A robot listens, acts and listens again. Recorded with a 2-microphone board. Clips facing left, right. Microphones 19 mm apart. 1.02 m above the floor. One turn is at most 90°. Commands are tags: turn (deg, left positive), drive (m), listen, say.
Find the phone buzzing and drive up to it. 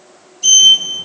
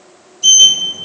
<listen/>
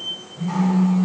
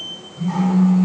<turn deg="-30"/>
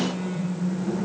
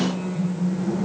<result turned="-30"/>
<turn deg="20"/>
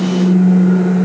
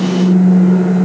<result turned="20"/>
<drive m="1.0"/>
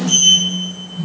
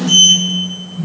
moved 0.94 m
<drive m="1.0"/>
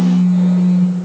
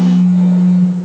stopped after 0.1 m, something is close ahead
<say>Arrived at the phone buzzing, straight ahead.</say>